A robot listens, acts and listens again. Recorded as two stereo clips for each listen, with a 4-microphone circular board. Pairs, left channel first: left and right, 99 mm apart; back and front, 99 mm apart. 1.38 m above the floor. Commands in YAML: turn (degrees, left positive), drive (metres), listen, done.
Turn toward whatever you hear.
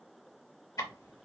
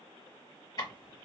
turn: 135
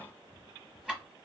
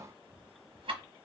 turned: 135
turn: -10
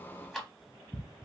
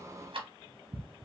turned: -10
done: "Found it: ticking, straight ahead."